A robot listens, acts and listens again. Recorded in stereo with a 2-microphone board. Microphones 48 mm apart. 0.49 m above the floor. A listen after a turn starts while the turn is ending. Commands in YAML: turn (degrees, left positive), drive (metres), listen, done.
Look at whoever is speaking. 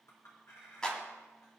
listen: true
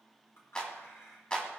listen: true
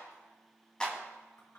done: "I can't make out anyone speaking, only a clap and a clink."